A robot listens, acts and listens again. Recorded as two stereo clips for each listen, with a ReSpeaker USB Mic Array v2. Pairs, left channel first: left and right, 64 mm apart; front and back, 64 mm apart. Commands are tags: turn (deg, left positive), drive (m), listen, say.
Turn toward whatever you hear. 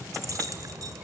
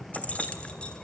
<turn deg="-70"/>
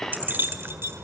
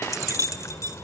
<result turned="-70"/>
<turn deg="-40"/>
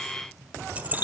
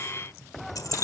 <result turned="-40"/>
<turn deg="-30"/>
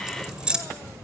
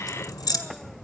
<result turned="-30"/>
<turn deg="-15"/>
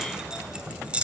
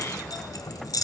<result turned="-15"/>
<turn deg="-20"/>
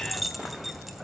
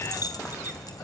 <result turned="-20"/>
<say>Facing the keys jangling.</say>